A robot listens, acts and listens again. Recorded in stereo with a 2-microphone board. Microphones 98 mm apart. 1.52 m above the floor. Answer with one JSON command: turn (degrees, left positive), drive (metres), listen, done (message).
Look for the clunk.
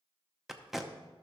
{"listen": true}
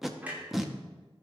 {"turn": -15}
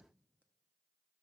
{"listen": true}
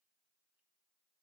{"done": "I heard a clunk, but can't make it out now. It was about straight ahead or 150° right."}